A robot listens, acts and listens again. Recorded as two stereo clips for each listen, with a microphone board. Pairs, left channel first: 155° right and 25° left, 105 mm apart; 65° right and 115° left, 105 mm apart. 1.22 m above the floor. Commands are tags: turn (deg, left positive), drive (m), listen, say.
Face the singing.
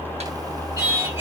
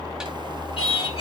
<turn deg="-45"/>
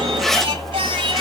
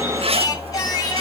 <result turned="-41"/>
<turn deg="-20"/>
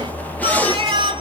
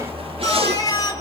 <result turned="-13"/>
<turn deg="-20"/>
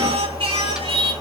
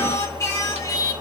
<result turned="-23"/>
<turn deg="-15"/>
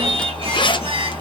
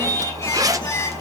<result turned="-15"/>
<turn deg="-10"/>
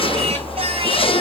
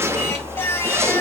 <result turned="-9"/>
<say>Found it: singing, straight ahead.</say>